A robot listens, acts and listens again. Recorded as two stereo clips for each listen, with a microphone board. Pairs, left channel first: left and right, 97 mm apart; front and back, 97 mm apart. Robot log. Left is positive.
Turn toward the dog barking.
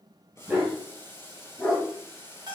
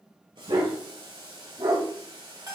note: The dog barking: 175° right.
cmd yaw -175
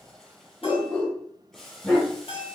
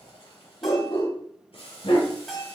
note: The dog barking is now 20° left.
cmd yaw +20
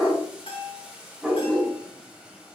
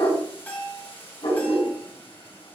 end: Found it: a dog barking, straight ahead.